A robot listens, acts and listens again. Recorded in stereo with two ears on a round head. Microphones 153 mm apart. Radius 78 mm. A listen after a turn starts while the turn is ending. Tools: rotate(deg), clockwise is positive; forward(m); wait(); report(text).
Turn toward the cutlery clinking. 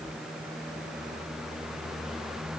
wait()
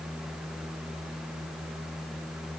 wait()
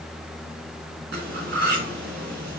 rotate(70)
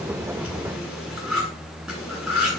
report("Facing the cutlery clinking.")